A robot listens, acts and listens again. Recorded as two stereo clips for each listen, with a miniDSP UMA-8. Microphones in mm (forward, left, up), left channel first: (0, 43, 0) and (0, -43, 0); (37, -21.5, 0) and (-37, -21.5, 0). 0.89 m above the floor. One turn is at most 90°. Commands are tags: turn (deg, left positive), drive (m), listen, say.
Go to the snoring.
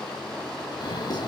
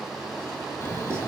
<turn deg="55"/>
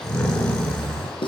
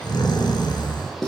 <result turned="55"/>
<turn deg="15"/>
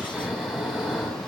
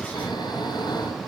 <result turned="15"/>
<drive m="1.0"/>
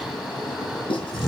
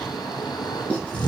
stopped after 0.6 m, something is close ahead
<say>Something is in my way. I am facing the snoring but have not reached it.</say>